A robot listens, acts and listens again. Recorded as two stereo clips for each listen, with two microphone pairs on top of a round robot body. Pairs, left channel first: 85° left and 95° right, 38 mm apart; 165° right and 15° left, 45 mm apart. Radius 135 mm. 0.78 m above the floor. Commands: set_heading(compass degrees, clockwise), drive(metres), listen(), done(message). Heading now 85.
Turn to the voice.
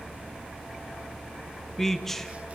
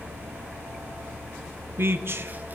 set_heading(75)
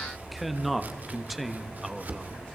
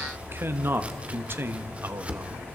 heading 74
done("Facing the man speaking, 1 to 2 m away.")